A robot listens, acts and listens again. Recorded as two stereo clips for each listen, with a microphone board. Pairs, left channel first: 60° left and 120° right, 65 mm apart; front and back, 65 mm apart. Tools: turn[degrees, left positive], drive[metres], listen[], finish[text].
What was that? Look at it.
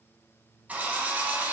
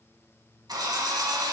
Thought: The drill: 170° left.
Action: turn[170]
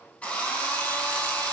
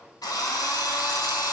Thought: The drill is now 10° right.
Action: turn[-10]
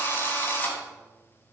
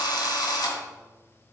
Action: finish[Found it: a drill, straight ahead.]